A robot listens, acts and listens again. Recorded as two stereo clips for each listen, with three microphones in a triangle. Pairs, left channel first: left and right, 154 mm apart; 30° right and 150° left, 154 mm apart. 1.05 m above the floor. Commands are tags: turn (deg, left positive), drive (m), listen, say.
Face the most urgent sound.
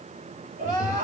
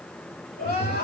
<turn deg="-50"/>
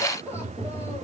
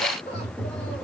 <turn deg="15"/>
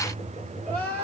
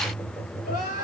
<say>Facing the crying.</say>